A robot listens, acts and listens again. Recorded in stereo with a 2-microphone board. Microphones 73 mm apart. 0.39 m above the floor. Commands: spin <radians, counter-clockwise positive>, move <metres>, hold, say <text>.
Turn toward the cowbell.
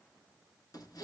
hold
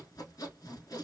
hold
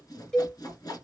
spin 0.52
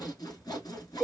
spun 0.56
spin -0.35
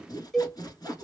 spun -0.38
say Found it: a cowbell, straight ahead, under 1 m away.